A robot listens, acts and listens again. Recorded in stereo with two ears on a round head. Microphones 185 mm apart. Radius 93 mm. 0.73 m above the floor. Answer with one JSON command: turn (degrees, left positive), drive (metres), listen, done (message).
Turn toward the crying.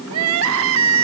{"turn": -90}
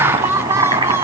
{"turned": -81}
{"turn": -15}
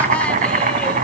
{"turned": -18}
{"listen": true}
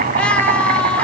{"done": "Found it: crying, straight ahead, 1 to 2 m away."}